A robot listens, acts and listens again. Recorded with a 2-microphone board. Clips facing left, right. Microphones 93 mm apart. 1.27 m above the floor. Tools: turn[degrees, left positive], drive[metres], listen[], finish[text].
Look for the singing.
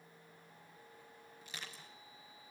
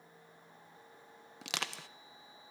Action: listen[]
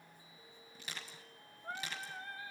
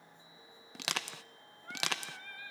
Thought: The singing: about 30° left or 150° left.
Action: turn[30]
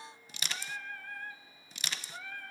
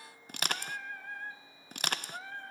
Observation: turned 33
Thought: So it is at 30° right.
Action: turn[-30]
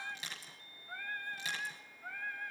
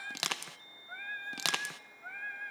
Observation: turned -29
Action: finish[Facing the singing, 2 to 4 m away.]